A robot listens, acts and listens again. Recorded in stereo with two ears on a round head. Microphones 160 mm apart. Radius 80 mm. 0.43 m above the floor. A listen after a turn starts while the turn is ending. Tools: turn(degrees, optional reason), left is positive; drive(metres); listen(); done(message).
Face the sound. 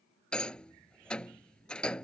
turn(degrees=30)
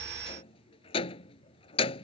turn(degrees=145, reason="So it is at 145° left.")
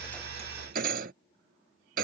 turn(degrees=-55, reason="The rattle is now 55° right.")
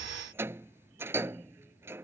turn(degrees=-15, reason="The rattle is now 15° right.")
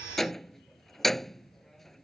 done("Found it: a rattle, straight ahead.")